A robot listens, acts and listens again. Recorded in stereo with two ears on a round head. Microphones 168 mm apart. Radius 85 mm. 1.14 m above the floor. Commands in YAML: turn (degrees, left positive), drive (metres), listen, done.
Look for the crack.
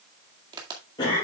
turn: -25
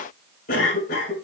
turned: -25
listen: true
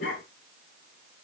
done: "I heard a crack, but can't make it out now. It was about straight ahead or 130° right."